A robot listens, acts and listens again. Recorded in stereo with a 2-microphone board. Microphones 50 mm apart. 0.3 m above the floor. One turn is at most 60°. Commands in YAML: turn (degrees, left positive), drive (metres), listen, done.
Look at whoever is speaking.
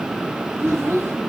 turn: -60
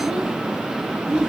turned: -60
turn: -20
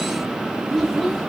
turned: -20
done: "Facing the child speaking."